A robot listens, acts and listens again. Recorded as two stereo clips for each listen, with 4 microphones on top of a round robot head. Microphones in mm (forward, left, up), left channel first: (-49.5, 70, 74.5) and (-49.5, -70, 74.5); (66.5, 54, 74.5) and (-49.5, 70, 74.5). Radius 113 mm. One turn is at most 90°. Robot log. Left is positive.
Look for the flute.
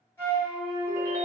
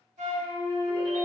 note: The flute: 165° left.
cmd yaw +90
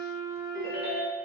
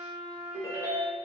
note: The flute is now 75° left.
cmd yaw +75
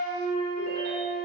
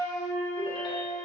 end: Facing the flute, 1 to 2 m away.